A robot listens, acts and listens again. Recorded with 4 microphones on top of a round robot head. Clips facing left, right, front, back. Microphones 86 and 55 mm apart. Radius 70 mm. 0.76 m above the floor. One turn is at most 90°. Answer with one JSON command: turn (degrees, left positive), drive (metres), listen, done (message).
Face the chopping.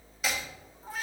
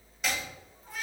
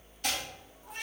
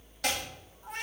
{"turn": 90}
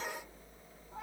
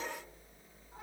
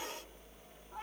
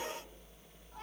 {"turn": 85}
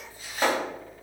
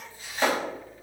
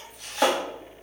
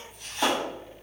{"turn": 10}
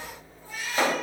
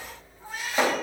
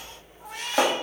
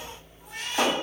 {"done": "Facing the chopping."}